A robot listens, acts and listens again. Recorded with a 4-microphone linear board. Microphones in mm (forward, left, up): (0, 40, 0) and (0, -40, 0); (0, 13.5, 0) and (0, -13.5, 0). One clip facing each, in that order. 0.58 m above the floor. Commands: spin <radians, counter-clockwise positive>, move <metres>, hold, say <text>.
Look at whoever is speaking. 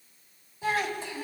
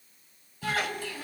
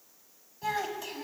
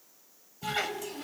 spin 0.35
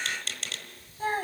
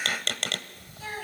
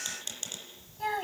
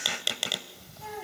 spin 2.44
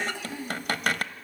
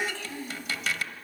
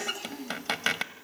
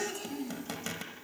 spin 0.26
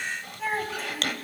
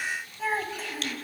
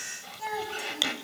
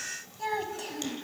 say Facing the child speaking.